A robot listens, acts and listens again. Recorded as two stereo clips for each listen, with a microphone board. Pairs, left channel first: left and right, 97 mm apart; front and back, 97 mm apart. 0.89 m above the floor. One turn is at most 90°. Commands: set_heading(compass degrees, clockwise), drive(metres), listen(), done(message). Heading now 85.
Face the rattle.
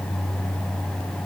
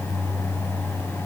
listen()
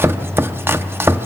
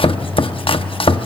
listen()
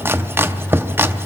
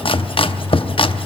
done("I can't make out a rattle to turn to.")